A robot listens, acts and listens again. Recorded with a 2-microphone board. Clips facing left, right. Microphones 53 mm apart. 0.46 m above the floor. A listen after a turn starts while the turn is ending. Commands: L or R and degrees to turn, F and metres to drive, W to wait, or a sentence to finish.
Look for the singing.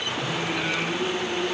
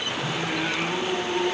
R75
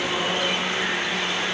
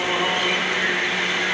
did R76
W
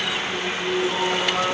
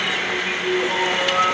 R25
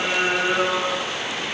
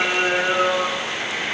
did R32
Facing the singing, over 4 m away.